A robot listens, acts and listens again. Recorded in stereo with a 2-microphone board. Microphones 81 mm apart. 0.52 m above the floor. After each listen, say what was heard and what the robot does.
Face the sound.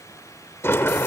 The sliding door: about 30° left or 150° left. Turn 30° left.
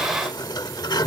So it is at 120° left. Turn 120° left.
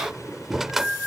Facing the sliding door.